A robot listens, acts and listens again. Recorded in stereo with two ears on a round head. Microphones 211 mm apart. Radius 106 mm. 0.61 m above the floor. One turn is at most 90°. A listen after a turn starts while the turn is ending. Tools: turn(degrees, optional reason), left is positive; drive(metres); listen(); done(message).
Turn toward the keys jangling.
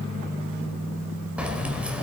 turn(degrees=-30)
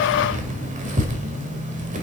turn(degrees=-90, reason="So it is at 145° right.")
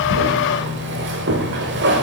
turn(degrees=-50, reason="The keys jangling is now 50° right.")
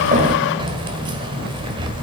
turn(degrees=-20, reason="The keys jangling is now 20° right.")
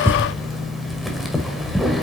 done("Facing the keys jangling.")